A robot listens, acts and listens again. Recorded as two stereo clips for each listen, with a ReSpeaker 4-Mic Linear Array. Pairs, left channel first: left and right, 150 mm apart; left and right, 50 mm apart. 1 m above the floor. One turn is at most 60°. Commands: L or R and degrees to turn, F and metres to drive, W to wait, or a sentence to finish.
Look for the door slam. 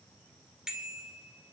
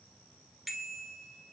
W
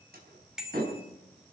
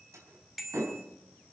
R60
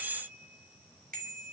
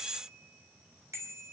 R30
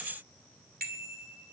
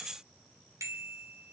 Facing where the door slam came from. I can't hear it now.